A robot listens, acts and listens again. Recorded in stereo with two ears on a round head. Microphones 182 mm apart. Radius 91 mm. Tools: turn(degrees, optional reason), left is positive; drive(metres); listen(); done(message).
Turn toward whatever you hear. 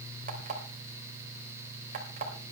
turn(degrees=-40, reason="The alarm clock: about 40° right or 140° right.")
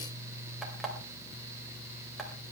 done("Found it: an alarm clock, straight ahead, 2 to 4 m away.")